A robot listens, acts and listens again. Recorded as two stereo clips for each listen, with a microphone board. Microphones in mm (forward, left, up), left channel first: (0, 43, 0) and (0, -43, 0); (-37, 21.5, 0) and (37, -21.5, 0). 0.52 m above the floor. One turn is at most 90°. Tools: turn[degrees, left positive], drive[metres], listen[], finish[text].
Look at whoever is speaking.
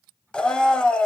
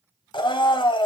Action: listen[]
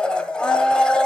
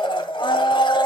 Action: listen[]
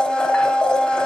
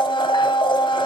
Action: finish[I can't make out anyone speaking, only a blender.]